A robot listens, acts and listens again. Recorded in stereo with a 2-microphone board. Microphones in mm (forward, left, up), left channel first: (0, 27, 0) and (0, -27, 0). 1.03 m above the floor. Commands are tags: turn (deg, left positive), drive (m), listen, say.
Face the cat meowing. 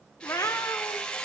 <turn deg="65"/>
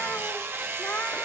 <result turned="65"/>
<listen/>
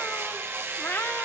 <turn deg="40"/>
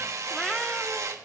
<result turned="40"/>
<say>Facing the cat meowing, 1 to 2 m away.</say>